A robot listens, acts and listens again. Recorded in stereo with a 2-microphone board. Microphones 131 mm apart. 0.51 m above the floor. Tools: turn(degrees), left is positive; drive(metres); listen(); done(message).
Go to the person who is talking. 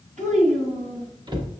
turn(degrees=-60)
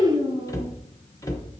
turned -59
turn(degrees=-55)
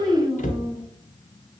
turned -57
drive(metres=1.0)
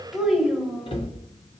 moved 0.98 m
drive(metres=1.0)
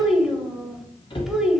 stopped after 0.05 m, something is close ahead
done("Arrived at the child speaking, straight ahead.")